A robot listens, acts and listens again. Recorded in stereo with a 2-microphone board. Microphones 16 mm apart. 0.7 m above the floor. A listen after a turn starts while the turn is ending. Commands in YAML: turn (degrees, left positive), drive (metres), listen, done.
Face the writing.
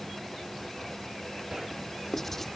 turn: 30
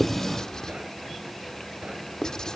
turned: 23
turn: 140
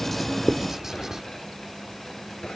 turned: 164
turn: -25
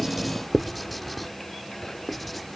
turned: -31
turn: 10
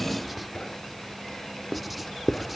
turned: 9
done: "Facing the writing."